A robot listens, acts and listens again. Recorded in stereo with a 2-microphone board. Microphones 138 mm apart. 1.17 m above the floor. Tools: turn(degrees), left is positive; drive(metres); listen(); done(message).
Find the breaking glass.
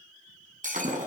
turn(degrees=-70)
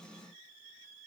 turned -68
listen()
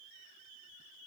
done("I heard breaking glass, but can't make it out now. It was about 5° right or 40° right.")